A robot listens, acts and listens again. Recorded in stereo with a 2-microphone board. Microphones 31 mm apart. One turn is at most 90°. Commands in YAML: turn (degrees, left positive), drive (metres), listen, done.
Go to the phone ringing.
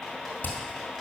listen: true
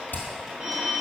turn: -50
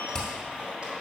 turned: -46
listen: true
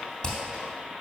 listen: true
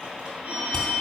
turn: -80
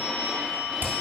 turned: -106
turn: 25
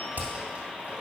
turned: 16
turn: 10
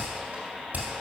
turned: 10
listen: true
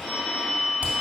drive: 1.0
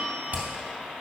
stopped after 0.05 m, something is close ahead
done: "Blocked. The phone ringing is further on, straight ahead."